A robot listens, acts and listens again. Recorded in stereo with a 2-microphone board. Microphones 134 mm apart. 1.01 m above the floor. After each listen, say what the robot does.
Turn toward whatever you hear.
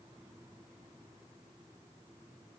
Keep listening.
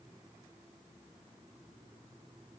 Keep listening.
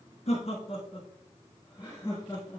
Turn 20° left.
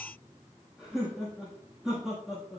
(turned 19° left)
Found it: laughter, straight ahead, 1 to 2 m away.